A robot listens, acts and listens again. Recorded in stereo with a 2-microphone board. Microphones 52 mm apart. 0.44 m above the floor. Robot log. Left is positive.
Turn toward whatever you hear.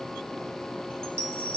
note: The chime: about 50° right or 130° right.
cmd yaw -50
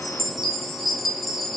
end: Found it: a chime, straight ahead.